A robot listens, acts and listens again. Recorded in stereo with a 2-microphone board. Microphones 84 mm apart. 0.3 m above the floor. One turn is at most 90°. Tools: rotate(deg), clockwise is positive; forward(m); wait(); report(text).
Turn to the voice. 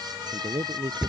rotate(75)
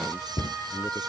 wait()
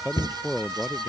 report("Found it: a man speaking, straight ahead.")